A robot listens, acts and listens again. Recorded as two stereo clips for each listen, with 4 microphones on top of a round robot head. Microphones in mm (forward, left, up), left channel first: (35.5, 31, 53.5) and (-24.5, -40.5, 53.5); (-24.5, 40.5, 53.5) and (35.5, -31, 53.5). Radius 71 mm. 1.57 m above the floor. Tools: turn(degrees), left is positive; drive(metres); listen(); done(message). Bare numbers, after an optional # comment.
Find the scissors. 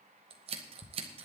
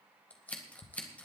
# The scissors: 155° right.
turn(-155)
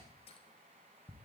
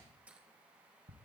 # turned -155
listen()
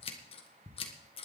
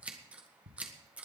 # The scissors is now 30° left.
turn(30)
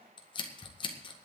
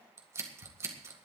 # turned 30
# The scissors is now 15° left.
turn(15)
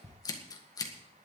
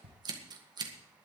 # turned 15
done("Facing the scissors, 2 to 4 m away.")